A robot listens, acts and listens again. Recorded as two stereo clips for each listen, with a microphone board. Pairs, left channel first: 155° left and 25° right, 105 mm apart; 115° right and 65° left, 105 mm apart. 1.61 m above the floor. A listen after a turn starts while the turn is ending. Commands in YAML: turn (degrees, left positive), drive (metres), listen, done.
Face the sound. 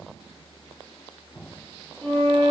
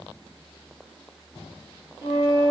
turn: -140
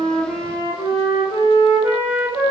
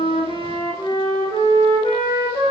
turn: -80
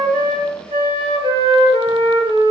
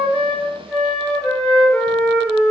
turn: -45
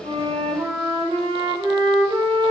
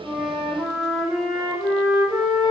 done: "Found it: a flute, straight ahead."